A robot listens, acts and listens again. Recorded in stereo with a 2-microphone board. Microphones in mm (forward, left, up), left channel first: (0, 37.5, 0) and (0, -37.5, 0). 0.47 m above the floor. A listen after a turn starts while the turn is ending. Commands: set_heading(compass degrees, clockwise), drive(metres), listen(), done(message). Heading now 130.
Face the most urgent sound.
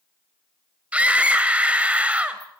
set_heading(150)
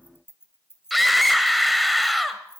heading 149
done("Facing the scream, 1 to 2 m away.")